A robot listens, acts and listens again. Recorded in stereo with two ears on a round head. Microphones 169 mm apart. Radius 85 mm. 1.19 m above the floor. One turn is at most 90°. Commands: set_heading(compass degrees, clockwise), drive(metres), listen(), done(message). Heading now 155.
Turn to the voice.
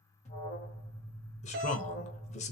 set_heading(120)
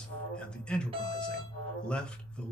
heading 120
done("Facing the man speaking.")